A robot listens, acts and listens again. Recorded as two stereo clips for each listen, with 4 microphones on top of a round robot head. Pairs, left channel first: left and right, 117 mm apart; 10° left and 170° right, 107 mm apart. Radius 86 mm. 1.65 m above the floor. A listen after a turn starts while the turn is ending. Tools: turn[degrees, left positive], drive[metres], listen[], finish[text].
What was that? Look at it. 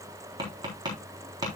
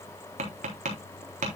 Thought: The tapping: 150° right.
Action: turn[-150]
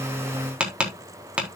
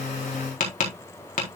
Thought: The tapping is now 10° right.
Action: turn[-10]
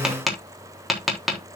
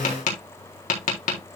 Action: finish[Found it: tapping, straight ahead, 2 to 4 m away.]